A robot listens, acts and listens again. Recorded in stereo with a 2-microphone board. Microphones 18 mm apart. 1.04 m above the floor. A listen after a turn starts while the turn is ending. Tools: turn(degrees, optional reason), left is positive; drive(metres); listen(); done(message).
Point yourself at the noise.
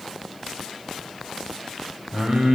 turn(degrees=-70, reason="The singing: about 70° right or 110° right.")
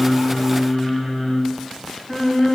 turn(degrees=10, reason="So it is at 10° left.")
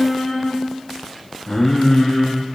turn(degrees=10, reason="The singing is now 10° left.")
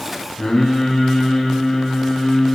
done("Found it: singing, straight ahead.")